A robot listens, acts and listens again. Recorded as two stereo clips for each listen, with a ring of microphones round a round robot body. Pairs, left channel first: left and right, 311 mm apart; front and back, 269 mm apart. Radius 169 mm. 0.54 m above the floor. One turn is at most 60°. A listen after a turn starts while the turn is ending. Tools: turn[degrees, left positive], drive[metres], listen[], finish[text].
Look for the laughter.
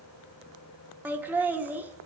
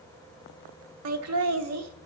Thought: The laughter: 175° right.
Action: turn[-60]
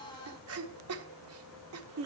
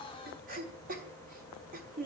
Thought: The laughter is now 125° right.
Action: turn[-60]
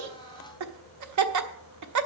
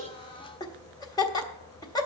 Thought: The laughter is now 75° right.
Action: turn[-60]
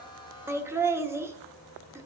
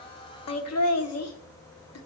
Thought: The laughter is now 10° right.
Action: turn[-10]
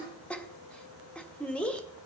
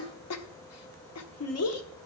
Action: finish[Found it: laughter, straight ahead, 1 to 2 m away.]